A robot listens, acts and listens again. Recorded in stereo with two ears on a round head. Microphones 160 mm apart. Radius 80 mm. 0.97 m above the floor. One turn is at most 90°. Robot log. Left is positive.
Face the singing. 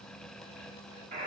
cmd idle
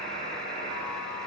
cmd idle
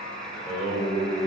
note: The singing: about 30° right or 150° right.
cmd yaw -30
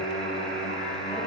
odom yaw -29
end: Facing the singing.